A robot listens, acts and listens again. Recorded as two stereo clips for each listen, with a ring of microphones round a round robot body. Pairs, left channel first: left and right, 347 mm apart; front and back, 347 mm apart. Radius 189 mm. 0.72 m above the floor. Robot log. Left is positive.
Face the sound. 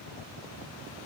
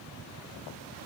cmd idle
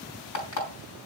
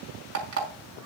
note: The alarm clock: 130° left.
cmd yaw +130
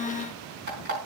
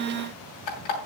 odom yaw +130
note: The alarm clock is now 25° right.
cmd yaw -25
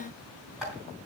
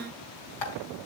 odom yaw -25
end: Found it: an alarm clock, straight ahead, over 4 m away.